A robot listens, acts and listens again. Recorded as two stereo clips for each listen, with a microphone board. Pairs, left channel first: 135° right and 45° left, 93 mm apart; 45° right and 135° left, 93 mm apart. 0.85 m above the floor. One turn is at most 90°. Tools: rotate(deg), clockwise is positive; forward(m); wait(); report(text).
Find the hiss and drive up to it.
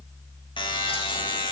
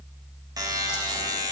wait()
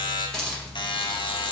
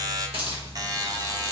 rotate(-90)
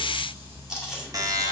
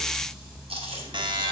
rotate(-50)
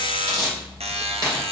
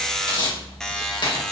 forward(1.0)
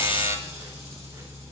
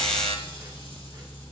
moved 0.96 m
wait()
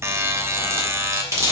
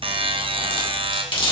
rotate(15)
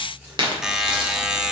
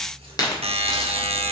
forward(1.0)
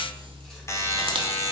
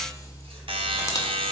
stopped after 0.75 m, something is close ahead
wait()
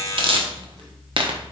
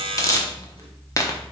rotate(-10)
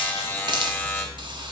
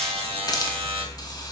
report("Arrived at the hiss, straight ahead.")